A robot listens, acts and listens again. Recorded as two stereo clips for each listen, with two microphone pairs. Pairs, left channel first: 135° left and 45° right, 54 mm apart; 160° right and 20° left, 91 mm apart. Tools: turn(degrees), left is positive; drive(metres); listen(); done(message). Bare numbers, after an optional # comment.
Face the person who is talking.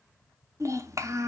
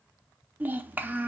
# The child speaking: 50° right.
turn(-50)
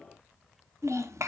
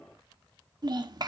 # The child speaking is now 20° right.
turn(-20)
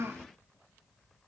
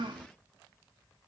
# The child speaking is now 10° right.
turn(-10)
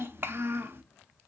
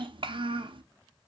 done("Facing the child speaking, under 1 m away.")